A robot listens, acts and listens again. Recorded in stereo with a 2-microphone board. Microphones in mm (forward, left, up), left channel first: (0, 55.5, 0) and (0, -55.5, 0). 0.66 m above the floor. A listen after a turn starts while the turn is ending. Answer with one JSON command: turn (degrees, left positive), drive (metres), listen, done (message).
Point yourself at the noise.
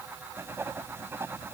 {"turn": -20}
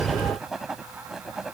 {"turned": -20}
{"done": "Found it: writing, straight ahead."}